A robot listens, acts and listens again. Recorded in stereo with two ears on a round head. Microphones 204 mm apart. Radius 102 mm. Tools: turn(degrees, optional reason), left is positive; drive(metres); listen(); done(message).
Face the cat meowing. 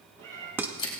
turn(degrees=-55, reason="The cat meowing: about 55° right or 125° right.")
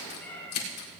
turn(degrees=10, reason="So it is at 10° left.")
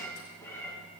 turn(degrees=10, reason="The cat meowing is now 10° left.")
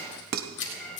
turn(degrees=15, reason="The cat meowing is now 15° left.")
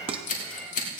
done("Facing the cat meowing, over 4 m away.")